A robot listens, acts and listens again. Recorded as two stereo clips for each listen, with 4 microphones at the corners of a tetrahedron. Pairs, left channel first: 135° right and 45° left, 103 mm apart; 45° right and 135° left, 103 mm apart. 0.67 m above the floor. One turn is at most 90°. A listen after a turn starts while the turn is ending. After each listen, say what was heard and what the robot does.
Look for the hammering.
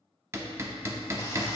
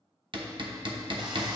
The hammering: 105° left. Turn 90° left.
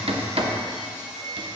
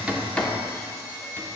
Nothing new. It was at 15° left. Turn 15° left.
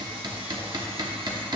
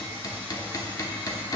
Facing the hammering.